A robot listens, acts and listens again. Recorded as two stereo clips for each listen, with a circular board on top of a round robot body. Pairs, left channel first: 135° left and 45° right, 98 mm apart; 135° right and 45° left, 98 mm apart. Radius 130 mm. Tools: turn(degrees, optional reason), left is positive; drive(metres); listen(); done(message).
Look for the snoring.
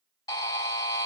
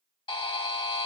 listen()
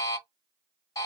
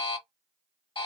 listen()
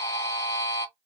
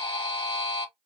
done("I can't make out snoring to turn to.")